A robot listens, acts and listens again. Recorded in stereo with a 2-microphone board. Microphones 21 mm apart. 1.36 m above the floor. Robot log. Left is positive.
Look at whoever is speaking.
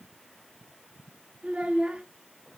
cmd yaw -90
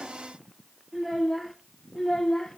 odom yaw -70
note: So it is at 15° left.
cmd yaw +15
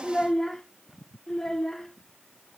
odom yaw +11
note: The child speaking is now 25° left.
cmd yaw +25
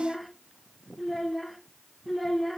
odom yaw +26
end: Facing the child speaking.